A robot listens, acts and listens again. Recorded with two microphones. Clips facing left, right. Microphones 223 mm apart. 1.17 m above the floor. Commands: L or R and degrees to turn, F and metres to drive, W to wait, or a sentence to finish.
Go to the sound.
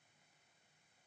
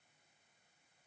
W
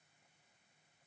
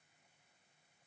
W
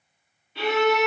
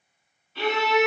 L30
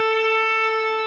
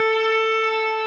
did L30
L135
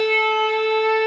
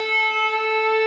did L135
L15
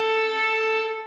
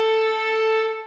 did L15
F1.0
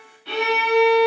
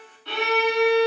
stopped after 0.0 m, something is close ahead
L15
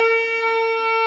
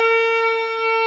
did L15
Something is in my way. I am facing the violin but have not reached it.